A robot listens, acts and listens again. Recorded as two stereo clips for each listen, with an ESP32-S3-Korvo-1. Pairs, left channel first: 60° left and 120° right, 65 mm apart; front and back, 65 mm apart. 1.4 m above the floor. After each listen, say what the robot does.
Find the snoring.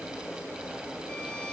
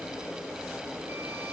Keep listening.
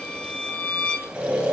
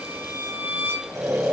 Turn 170° left.
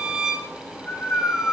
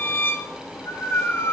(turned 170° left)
Found it: snoring, straight ahead.